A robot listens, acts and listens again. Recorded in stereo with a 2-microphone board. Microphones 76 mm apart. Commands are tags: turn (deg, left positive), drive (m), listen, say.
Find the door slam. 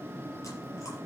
<listen/>
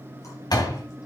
<turn deg="60"/>
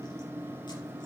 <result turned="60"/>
<listen/>
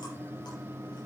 <say>I heard a door slam, but can't make it out now. It was about straight ahead or 60° left.</say>